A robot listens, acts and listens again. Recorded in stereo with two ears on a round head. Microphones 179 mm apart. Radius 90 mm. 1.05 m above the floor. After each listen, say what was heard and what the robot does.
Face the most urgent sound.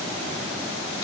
Keep listening.
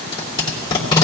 Keep listening.
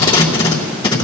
I can't make out anything urgent, only tape being pulled.